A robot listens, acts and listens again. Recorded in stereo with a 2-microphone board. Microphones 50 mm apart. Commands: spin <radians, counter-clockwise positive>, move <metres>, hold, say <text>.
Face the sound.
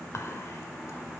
spin 1.13
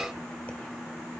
hold
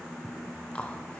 spin 0.52
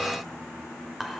say Found it: whispering, straight ahead, 1 to 2 m away.